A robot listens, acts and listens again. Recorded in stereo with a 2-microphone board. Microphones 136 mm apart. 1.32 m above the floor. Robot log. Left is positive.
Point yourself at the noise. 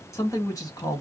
note: The man speaking: about 30° left or 150° left.
cmd yaw +30
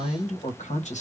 note: So it is at 110° left.
cmd yaw +110
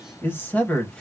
note: The man speaking is now 10° left.
cmd yaw +10
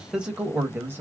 note: The man speaking is now 15° right.
cmd yaw -15
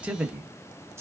note: The man speaking is now 15° right.
cmd yaw -15
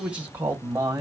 note: The man speaking is now 20° right.
cmd yaw -20
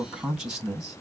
end: Found it: a man speaking, straight ahead, 1 to 2 m away.